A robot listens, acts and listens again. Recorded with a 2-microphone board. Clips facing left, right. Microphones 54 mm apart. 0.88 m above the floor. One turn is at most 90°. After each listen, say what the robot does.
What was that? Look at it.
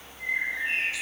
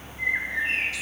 Turn 70° right.
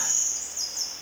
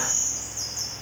Turn 35° right.
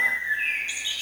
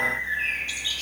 Turn 20° left.
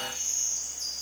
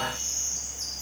Found it: a bird, straight ahead.